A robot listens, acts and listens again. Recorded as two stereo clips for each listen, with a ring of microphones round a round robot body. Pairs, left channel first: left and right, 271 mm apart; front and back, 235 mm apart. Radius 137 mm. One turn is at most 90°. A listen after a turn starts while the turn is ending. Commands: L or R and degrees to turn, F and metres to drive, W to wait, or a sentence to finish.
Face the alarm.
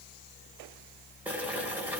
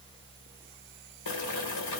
W
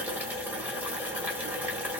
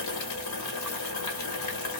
W
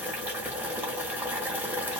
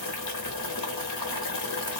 I can't make out an alarm to turn to.